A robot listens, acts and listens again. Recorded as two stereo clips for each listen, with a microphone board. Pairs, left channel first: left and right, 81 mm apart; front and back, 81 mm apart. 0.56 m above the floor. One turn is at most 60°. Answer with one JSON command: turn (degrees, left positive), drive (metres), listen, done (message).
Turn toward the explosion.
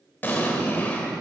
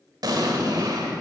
{"turn": 60}
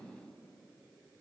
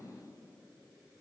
{"turn": 60}
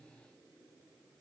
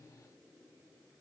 {"turn": 35}
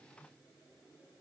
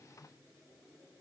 {"done": "Facing where the explosion came from. I can't hear it now."}